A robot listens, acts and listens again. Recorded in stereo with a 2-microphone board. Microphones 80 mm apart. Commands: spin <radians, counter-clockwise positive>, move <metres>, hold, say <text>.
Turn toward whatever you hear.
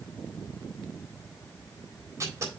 spin -0.70
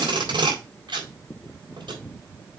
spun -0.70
spin -1.83
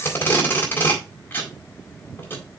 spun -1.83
spin 0.44
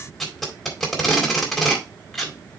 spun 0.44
say Found it: tape being pulled, straight ahead.